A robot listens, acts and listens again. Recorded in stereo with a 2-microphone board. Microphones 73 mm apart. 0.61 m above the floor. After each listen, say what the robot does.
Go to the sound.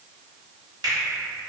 Turn 90° right.
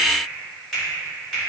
Drive 1.0 m forward.
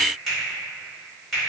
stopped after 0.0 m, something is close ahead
Blocked. The finger snap is further on, straight ahead.